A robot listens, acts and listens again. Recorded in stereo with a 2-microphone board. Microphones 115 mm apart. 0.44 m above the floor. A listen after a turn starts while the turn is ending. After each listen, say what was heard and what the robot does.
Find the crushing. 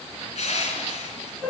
The crushing: about 75° left or 105° left. Turn 75° left.
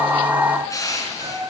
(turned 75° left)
So it is at 30° left. Turn 30° left.
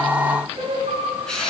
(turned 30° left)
Facing the crushing, 2 to 4 m away.